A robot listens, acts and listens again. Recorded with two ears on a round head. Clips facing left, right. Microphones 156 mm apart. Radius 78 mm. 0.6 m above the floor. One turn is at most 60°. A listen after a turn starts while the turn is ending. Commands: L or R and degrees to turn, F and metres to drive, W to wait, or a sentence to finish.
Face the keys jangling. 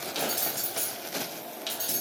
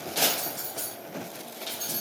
L25
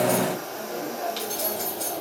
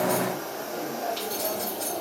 L40
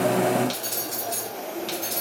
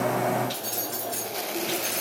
L60
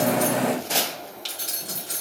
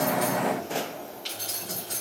L55
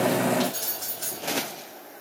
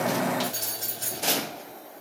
R20
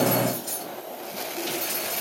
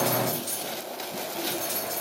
Found it: keys jangling, straight ahead.